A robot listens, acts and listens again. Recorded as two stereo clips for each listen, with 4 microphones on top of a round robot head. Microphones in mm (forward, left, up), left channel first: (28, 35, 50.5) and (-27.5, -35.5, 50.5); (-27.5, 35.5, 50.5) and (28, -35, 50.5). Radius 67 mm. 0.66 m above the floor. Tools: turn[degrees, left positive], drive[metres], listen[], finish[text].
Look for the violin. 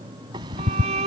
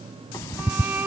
Thought: The violin: 125° right.
Action: turn[-125]
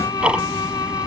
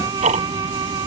Action: finish[Facing the violin.]